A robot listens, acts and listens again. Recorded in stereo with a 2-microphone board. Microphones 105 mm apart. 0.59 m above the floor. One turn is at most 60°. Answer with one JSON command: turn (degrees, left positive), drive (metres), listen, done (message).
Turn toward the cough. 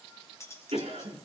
{"turn": -60}
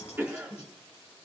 {"turn": -20}
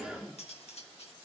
{"turn": -10}
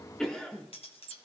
{"done": "Found it: a cough, straight ahead."}